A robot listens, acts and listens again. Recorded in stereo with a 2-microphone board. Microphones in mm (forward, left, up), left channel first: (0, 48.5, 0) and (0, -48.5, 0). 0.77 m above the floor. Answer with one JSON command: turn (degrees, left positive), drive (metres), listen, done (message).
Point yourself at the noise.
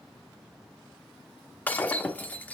{"turn": 15}
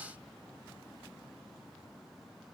{"listen": true}
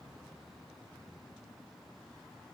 {"done": "I heard breaking glass, but can't make it out now. It was about straight ahead or 150° left."}